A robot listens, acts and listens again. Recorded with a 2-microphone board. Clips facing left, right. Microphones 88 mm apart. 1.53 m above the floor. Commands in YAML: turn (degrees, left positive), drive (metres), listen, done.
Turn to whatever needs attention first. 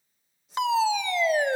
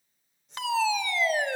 turn: 20
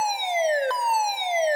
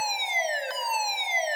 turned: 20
turn: 135
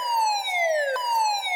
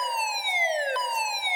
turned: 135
turn: 25
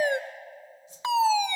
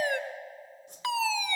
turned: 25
turn: 25
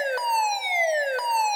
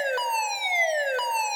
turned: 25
turn: 10
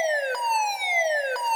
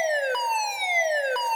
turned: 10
done: "Facing the fire alarm, 1 to 2 m away."